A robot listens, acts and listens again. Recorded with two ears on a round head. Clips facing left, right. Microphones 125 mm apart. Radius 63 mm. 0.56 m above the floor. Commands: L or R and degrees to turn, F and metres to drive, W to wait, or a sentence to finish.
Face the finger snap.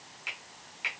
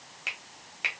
R60
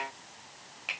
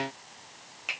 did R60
Found it: a finger snap, straight ahead, 2 to 4 m away.